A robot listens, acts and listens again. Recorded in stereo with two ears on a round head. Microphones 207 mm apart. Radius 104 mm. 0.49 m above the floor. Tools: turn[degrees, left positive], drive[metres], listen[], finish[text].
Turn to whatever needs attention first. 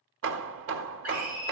Action: turn[-30]
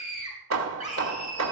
Thought: So it is at 140° right.
Action: turn[-140]
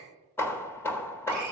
Action: listen[]
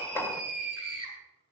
Thought: The scream is now 50° right.
Action: turn[-50]
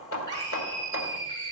Thought: The scream is now 20° left.
Action: turn[20]
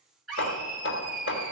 Action: finish[Facing the scream, 2 to 4 m away.]